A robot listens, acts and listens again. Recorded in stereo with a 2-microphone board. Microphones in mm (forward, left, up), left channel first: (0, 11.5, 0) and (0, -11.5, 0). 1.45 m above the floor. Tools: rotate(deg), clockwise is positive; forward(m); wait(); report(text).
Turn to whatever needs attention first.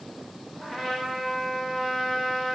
wait()
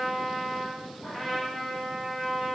wait()
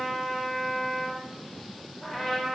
report("I can't make out anything urgent to turn to.")